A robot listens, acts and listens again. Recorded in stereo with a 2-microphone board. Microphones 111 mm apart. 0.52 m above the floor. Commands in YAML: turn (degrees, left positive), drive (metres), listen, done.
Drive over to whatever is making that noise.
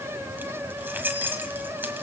turn: -15
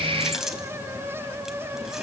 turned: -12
drive: 1.0
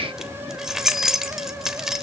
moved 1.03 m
drive: 1.0
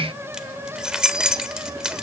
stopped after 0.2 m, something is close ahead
done: "I am next to the keys jangling."